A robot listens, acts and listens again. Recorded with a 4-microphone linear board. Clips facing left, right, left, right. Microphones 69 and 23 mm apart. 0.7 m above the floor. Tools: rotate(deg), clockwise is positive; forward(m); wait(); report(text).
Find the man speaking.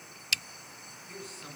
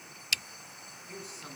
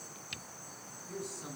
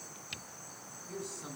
rotate(30)
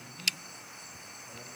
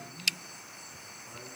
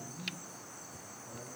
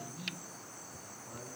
rotate(145)
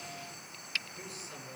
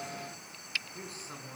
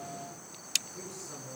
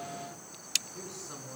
rotate(40)
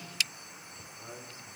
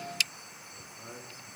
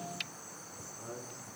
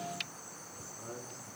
rotate(10)
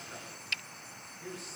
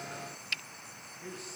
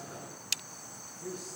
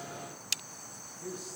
report("Facing the man speaking.")